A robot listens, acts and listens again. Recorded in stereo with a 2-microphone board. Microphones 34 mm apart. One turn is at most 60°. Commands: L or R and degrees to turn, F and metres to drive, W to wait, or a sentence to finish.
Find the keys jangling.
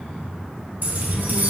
R55
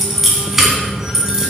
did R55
R15
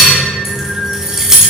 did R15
R15
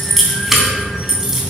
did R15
R10
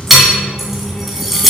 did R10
Found it: keys jangling, straight ahead.